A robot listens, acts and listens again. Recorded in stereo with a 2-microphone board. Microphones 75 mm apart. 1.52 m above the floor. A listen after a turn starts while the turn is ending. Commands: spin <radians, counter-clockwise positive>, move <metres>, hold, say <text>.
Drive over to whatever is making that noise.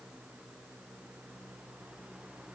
hold
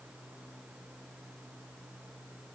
hold
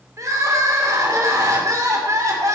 spin -0.79
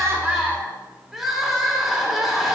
move 1.0
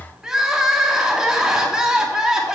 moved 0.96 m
spin -0.17
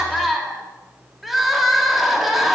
move 1.0
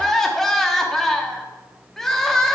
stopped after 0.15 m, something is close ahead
say I am next to the crying.